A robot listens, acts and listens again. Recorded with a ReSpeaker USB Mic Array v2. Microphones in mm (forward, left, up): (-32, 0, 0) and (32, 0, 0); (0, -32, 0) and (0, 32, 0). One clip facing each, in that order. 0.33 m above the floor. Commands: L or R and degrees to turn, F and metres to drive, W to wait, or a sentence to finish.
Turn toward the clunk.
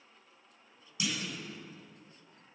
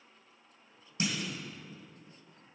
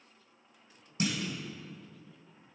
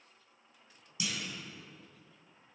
R50
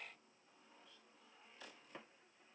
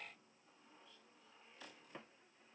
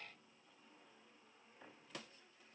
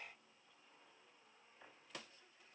I heard a clunk from this way, but can't make it out now.